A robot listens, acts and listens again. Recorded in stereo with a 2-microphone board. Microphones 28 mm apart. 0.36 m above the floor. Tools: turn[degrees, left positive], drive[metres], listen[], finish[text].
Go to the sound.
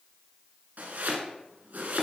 Thought: The chopping: about 60° right or 120° right.
Action: turn[-60]
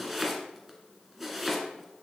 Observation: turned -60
Action: drive[1.0]
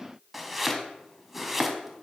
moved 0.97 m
Action: drive[1.0]
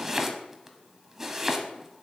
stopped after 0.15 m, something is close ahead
Thought: The chopping is now 10° right.
Action: turn[-10]
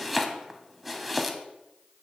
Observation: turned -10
Action: finish[I am next to the chopping.]